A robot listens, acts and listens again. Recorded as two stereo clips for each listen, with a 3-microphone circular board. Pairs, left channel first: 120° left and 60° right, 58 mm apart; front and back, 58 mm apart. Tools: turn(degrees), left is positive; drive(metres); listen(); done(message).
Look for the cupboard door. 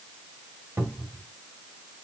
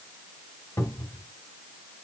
turn(degrees=-10)
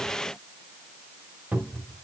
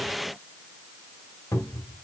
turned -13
done("Found it: a cupboard door, straight ahead, 1 to 2 m away.")